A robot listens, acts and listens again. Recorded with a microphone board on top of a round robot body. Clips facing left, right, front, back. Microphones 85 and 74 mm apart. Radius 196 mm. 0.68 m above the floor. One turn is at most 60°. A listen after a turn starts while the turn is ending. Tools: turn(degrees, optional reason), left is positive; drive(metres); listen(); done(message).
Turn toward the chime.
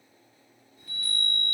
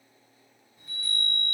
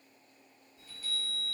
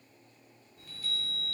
turn(degrees=-60, reason="The chime: 155° right.")
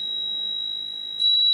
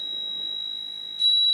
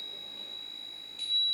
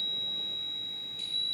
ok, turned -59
turn(degrees=-60, reason="The chime is now 95° right.")
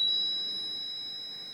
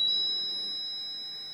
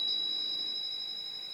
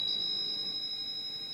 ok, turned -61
turn(degrees=-35, reason="The chime is now 35° right.")
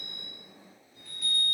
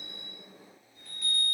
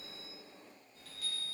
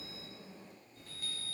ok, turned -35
done("Found it: a chime, straight ahead.")